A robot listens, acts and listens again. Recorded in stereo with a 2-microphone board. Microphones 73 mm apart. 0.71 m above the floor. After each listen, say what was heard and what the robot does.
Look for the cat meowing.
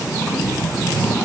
Keep listening.
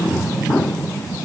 Keep listening.
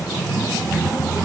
I can't make out a cat meowing.